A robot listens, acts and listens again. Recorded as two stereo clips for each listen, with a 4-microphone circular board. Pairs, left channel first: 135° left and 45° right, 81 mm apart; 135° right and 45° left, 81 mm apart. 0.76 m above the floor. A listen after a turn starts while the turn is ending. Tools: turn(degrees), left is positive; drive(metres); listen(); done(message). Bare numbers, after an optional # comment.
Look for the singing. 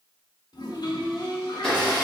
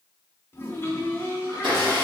# The singing: 105° left.
turn(105)
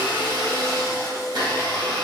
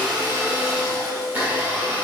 # The singing is now 10° right.
turn(-10)
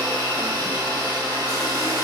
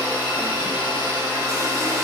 listen()
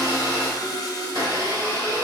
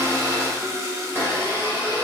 listen()
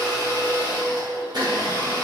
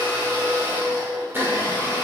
# The singing is now 45° right.
turn(-45)
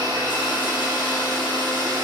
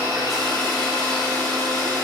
listen()
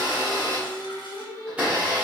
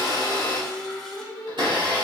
done("Facing the singing, 1 to 2 m away.")